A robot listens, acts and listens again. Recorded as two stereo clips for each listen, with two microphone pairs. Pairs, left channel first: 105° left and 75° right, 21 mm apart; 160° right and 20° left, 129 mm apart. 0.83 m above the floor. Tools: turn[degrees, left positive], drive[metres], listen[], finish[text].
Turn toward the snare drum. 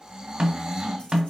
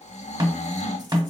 Thought: The snare drum: 35° right.
Action: turn[-35]
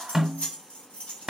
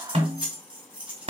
Thought: The snare drum is now 15° right.
Action: turn[-15]
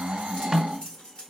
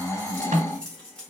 Action: finish[Facing the snare drum, 1 to 2 m away.]